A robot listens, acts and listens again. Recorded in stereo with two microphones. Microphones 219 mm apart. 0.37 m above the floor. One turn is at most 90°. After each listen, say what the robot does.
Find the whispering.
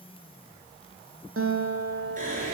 Turn 40° right.
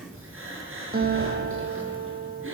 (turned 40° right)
Turn 90° right.
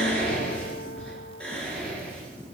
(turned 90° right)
Facing the whispering.